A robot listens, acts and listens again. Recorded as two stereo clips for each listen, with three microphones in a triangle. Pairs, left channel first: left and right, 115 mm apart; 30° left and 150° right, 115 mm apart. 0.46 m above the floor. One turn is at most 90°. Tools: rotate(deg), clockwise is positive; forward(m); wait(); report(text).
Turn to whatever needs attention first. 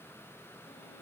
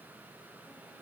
wait()
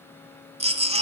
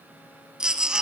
rotate(65)
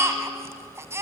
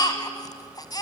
rotate(25)
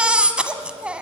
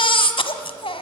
rotate(10)
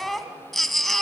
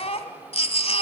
report("Found it: a baby crying, straight ahead.")